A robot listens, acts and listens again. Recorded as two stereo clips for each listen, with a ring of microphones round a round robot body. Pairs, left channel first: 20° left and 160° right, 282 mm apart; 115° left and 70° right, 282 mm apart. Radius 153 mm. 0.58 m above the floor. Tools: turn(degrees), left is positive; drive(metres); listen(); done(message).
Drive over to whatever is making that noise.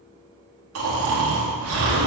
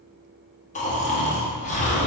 turn(degrees=175)
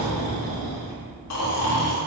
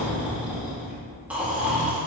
turn(degrees=15)
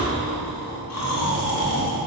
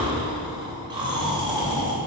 drive(metres=1.0)
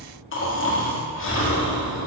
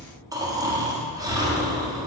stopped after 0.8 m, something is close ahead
done("Arrived at the snoring, straight ahead.")